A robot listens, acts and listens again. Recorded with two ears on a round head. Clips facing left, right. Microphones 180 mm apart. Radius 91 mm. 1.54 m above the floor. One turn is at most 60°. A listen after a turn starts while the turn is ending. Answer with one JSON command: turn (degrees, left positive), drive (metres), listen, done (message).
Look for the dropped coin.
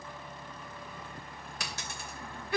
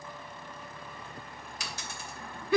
{"turn": 45}
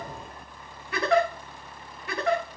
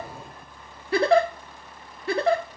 {"listen": true}
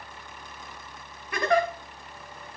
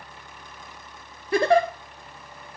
{"done": "I heard a dropped coin, but can't make it out now. It was about straight ahead or 90° left."}